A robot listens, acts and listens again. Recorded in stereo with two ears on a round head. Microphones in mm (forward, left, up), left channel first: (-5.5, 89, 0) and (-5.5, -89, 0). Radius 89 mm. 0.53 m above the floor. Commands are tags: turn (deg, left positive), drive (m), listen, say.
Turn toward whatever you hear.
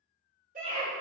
<turn deg="-40"/>
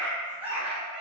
<turn deg="-10"/>
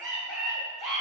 <say>Found it: a scream, straight ahead, 1 to 2 m away.</say>